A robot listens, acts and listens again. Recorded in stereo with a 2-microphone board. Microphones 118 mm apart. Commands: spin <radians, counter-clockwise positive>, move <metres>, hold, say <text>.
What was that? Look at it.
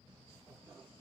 hold
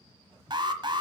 spin -0.70
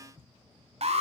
spin -1.66
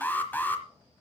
spin 0.35
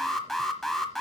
say Found it: an alarm, straight ahead, 1 to 2 m away.